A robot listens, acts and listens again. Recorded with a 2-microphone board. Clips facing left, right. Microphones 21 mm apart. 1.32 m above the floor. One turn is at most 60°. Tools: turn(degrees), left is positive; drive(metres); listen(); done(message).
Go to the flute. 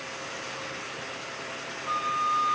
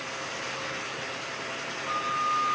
turn(degrees=50)
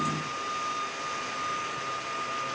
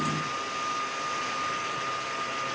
drive(metres=1.0)
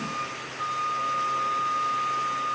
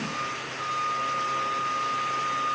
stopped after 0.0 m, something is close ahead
done("Blocked. The flute is further on, straight ahead.")